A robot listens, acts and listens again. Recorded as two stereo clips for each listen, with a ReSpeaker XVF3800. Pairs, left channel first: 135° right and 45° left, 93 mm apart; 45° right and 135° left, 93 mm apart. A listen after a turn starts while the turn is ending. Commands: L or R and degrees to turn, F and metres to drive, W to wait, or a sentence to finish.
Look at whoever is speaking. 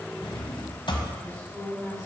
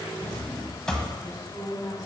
Facing the woman speaking.